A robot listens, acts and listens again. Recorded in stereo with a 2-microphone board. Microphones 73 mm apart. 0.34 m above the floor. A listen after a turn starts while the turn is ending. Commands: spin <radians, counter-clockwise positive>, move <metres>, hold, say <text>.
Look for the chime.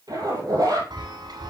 spin -1.57
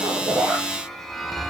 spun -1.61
say Found it: a chime, straight ahead, 1 to 2 m away.